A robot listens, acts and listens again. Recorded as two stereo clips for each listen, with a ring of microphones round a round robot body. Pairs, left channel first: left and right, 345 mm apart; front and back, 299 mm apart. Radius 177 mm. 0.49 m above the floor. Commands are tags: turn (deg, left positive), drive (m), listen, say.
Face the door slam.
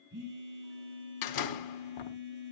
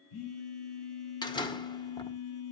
<turn deg="75"/>
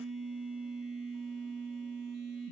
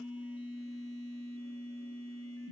<say>Facing where the door slam came from. I can't hear it now.</say>